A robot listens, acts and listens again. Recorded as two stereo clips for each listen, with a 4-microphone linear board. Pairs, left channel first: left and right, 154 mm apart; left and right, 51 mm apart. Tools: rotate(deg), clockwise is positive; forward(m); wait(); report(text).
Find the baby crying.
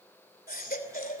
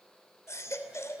rotate(-70)
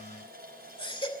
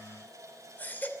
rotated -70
rotate(-35)
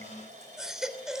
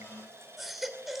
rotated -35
report("Found it: a baby crying, straight ahead.")